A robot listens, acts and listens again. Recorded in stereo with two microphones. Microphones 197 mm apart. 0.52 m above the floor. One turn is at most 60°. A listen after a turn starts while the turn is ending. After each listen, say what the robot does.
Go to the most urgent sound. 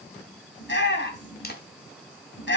Turn 60° left.
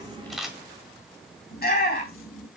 Turn 55° left.
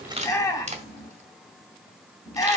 Turn 15° left.
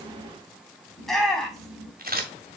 Drive 1.0 m forward.
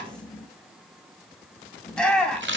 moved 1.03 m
Drive 1.0 m forward.
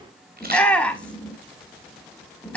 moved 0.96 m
Drive 1.0 m forward.
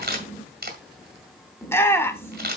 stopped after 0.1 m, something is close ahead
Turn 15° left.
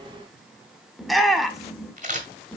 Arrived at the shout, straight ahead.